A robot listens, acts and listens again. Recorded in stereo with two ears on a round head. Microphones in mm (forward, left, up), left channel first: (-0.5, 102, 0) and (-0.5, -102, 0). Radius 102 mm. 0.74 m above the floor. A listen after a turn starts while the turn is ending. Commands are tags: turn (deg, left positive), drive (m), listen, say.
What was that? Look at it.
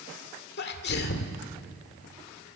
<turn deg="50"/>
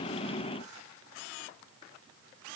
<listen/>
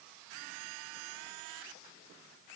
<say>I heard a sneeze, but can't make it out now. It was about straight ahead or 80° left.</say>